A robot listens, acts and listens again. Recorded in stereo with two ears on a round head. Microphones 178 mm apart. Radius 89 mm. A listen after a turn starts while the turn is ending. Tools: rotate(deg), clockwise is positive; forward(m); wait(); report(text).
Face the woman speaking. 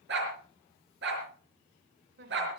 rotate(55)
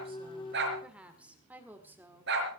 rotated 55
rotate(10)
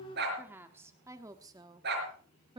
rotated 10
rotate(25)
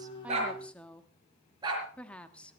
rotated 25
report("Facing the woman speaking, 1 to 2 m away.")